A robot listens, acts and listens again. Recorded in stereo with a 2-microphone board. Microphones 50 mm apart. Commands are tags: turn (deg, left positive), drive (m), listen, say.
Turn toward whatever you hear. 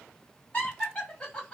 <turn deg="20"/>
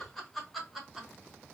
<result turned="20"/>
<say>Found it: laughter, straight ahead.</say>